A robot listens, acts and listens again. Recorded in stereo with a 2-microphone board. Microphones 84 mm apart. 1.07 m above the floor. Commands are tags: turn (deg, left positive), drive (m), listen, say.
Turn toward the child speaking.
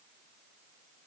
<listen/>
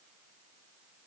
<listen/>
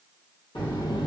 <turn deg="75"/>
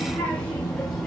<say>Found it: a child speaking, straight ahead, 1 to 2 m away.</say>